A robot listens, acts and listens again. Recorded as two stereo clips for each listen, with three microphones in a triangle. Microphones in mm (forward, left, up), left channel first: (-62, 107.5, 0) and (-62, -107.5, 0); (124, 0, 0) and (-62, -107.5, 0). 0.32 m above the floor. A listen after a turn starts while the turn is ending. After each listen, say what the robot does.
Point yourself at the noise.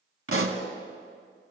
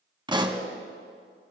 Turn 80° right.
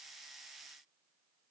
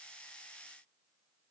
I heard a pop from this way, but can't make it out now.